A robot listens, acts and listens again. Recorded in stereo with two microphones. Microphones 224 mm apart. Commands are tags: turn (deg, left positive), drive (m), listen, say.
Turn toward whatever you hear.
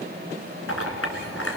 <turn deg="90"/>
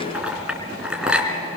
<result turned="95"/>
<say>Facing the clink.</say>